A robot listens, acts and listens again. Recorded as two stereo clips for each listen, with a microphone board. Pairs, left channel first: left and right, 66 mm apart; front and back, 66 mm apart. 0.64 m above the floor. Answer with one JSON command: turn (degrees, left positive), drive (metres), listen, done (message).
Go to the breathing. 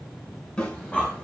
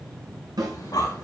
{"turn": 20}
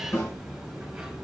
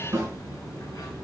{"drive": 1.0}
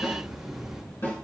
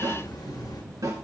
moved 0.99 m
{"drive": 1.0}
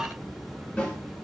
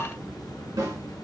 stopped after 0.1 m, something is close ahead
{"listen": true}
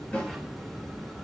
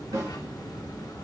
{"done": "I am next to the breathing."}